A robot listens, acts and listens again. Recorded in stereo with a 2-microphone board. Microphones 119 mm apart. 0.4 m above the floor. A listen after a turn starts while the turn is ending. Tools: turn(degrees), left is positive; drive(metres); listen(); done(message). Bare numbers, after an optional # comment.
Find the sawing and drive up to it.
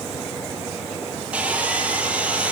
turn(-30)
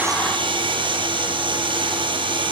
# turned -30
# So it is at 140° right.
turn(-140)
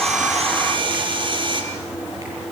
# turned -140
# The sawing is now 40° right.
turn(-40)
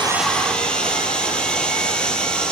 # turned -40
drive(1.0)
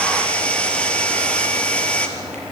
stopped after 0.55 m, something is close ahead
# The sawing is now 10° left.
turn(10)
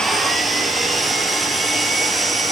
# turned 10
done("Something is in my way. I am facing the sawing but have not reached it.")